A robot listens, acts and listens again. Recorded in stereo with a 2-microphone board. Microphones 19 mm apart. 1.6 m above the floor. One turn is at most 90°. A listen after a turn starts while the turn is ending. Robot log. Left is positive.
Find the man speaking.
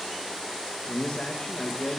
note: The man speaking: about 40° left or 140° left.
cmd yaw +40
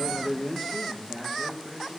note: So it is at 20° right.
cmd yaw -20
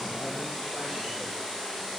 cmd idle
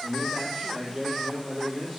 note: The man speaking is now 15° right.
cmd yaw -15
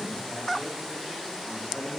end: Found it: a man speaking, straight ahead, 2 to 4 m away.